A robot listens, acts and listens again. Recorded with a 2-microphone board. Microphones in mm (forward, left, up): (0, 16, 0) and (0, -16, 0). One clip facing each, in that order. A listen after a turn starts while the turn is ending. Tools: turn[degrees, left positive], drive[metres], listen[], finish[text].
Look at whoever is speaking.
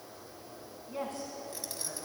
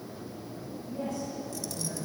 Thought: The woman speaking: about 50° left or 130° left.
Action: turn[50]
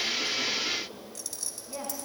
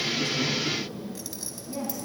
Action: finish[Found it: a woman speaking, straight ahead.]